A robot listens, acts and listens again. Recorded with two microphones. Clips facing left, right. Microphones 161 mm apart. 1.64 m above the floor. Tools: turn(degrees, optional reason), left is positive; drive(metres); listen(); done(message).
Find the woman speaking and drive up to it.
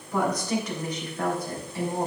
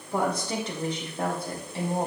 turn(degrees=-25, reason="The woman speaking: about 25° right or 155° right.")
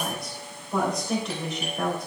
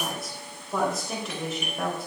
drive(metres=1.0)
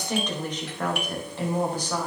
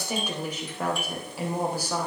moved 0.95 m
turn(degrees=-10, reason="The woman speaking is now 10° right.")
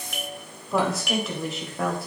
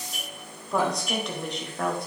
drive(metres=1.0)
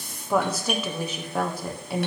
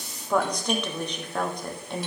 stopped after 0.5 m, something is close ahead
done("I am next to the woman speaking.")